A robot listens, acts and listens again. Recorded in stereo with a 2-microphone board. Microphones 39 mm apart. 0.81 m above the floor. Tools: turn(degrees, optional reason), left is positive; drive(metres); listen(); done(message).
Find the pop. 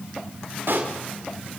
turn(degrees=-70, reason="The pop: about 70° right or 110° right.")
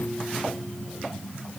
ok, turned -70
listen()
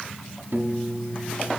done("I heard a pop, but can't make it out now. It was about straight ahead or 40° right.")